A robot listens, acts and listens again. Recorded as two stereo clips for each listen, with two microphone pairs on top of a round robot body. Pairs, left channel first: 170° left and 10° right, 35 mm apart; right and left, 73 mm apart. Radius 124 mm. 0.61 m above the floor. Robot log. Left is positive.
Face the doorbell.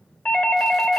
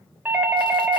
note: The doorbell: 155° left.
cmd yaw +155
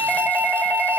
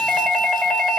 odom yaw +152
end: Found it: a doorbell, straight ahead.